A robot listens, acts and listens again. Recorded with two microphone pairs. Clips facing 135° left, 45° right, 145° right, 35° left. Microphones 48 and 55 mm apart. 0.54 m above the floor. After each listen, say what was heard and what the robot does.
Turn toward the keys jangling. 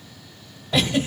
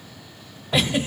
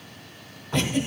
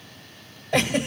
Keep listening.
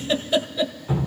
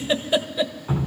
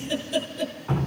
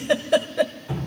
Keep listening.
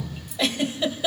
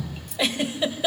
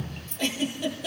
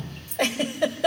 The keys jangling: 45° right. Turn 45° right.
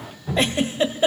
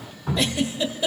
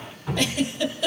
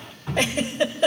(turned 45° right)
Keep listening.
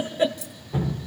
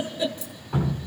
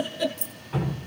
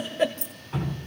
Facing the keys jangling, 1 to 2 m away.